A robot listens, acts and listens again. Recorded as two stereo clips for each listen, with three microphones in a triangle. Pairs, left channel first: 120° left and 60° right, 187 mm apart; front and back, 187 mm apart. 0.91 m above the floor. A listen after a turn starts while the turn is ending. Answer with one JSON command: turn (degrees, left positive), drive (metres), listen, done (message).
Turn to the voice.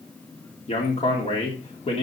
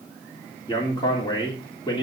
{"turn": 65}
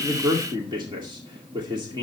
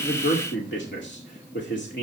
{"done": "Facing the man speaking, 2 to 4 m away."}